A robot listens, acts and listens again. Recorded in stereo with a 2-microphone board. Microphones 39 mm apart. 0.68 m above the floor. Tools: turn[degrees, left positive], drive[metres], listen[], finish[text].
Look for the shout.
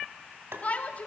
Thought: The shout: about 40° left or 140° left.
Action: turn[40]
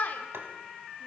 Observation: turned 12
Thought: So it is at 135° left.
Action: turn[135]
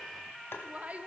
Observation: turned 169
Thought: The shout is now 50° right.
Action: turn[-50]
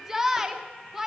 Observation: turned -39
Thought: The shout is now 10° right.
Action: turn[-10]
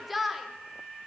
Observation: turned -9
Action: finish[Facing the shout.]